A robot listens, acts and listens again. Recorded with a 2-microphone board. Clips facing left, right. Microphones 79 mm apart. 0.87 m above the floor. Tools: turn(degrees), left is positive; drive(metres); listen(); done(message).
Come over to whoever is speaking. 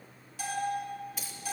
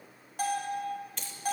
listen()
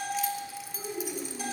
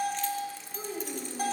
turn(degrees=-60)
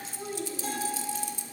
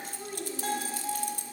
drive(metres=1.0)
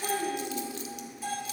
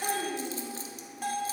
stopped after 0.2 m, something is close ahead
turn(degrees=-10)
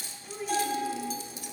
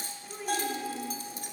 done("Blocked. The child speaking is further on, straight ahead.")